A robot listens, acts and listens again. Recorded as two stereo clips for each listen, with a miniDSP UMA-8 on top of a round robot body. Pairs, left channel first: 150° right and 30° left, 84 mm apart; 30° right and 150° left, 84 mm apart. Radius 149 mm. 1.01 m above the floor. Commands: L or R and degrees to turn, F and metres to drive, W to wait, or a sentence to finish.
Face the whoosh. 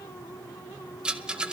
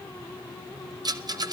W
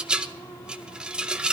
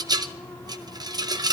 W
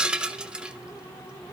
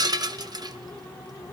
I can't make out a whoosh, only a rattle.